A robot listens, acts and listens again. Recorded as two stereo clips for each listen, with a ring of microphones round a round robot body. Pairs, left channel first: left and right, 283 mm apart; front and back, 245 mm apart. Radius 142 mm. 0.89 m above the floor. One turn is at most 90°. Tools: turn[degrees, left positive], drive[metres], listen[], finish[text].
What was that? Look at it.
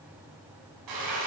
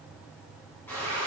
Thought: The frying: 85° right.
Action: turn[-85]
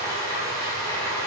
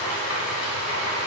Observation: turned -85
Thought: The frying is now 10° left.
Action: turn[10]
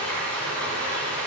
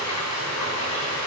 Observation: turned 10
Action: finish[Facing the frying, 2 to 4 m away.]